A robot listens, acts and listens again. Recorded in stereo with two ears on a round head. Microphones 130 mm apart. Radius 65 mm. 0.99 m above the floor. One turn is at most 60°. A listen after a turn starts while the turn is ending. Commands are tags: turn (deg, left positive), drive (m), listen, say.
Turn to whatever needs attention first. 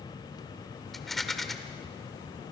<listen/>
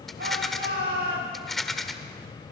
<turn deg="-60"/>
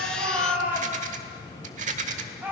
<turn deg="-15"/>
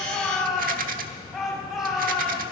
<say>Found it: a shout, straight ahead, over 4 m away.</say>